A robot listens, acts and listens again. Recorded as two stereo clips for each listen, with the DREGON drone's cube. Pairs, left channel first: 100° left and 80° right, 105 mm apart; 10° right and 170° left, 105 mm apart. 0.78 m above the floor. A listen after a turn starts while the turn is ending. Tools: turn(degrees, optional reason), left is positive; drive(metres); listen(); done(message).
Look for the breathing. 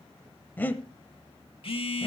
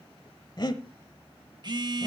turn(degrees=30, reason="The breathing: 30° left.")
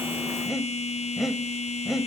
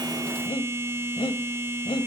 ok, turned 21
done("Found it: breathing, straight ahead.")